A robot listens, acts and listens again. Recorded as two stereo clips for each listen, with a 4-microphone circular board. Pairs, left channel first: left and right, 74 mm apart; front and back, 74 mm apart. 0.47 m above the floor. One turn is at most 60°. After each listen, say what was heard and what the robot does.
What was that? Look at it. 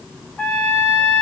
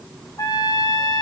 The trumpet: 15° left. Turn 15° left.
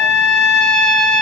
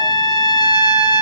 Facing the trumpet, 2 to 4 m away.